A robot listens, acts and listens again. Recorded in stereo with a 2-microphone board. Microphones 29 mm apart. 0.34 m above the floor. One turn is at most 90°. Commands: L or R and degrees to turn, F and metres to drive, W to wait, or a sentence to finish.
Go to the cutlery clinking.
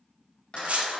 R55
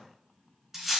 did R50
R10
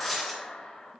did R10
F1.0
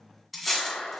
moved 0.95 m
F1.0
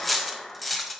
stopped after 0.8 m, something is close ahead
I am next to the cutlery clinking.